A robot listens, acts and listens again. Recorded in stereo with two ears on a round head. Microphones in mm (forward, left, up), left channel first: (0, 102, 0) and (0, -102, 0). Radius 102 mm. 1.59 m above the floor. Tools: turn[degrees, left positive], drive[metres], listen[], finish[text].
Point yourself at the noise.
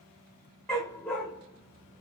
Action: turn[30]
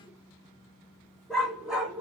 Action: turn[-30]
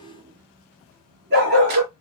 Thought: So it is at 130° right.
Action: turn[-130]
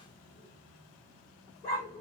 Thought: The dog barking is now 15° left.
Action: turn[15]
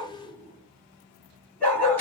Thought: The dog barking is now 10° left.
Action: turn[10]
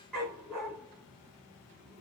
Action: finish[Found it: a dog barking, straight ahead, 1 to 2 m away.]